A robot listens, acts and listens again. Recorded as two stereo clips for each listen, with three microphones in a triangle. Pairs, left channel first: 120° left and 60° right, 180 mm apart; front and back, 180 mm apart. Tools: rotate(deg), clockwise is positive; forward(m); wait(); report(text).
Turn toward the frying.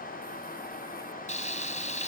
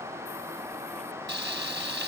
rotate(-170)
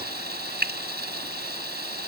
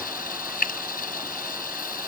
rotate(35)
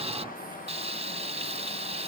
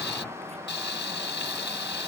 report("Facing the frying.")